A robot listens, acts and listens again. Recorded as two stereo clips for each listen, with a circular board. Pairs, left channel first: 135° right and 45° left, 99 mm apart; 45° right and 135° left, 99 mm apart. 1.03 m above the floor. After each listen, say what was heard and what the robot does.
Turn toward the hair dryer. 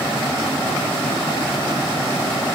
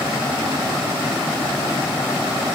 Keep listening.
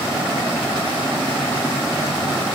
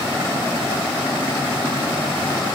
Keep listening.
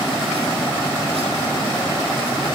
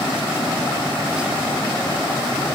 I can't make out a hair dryer.